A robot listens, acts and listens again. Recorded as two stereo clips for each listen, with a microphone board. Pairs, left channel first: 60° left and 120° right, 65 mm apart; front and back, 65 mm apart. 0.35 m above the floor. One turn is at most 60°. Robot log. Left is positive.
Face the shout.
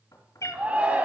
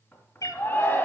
note: The shout: 55° right.
cmd yaw -55
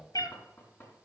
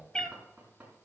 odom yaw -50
cmd idle
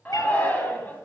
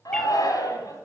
end: Facing the shout.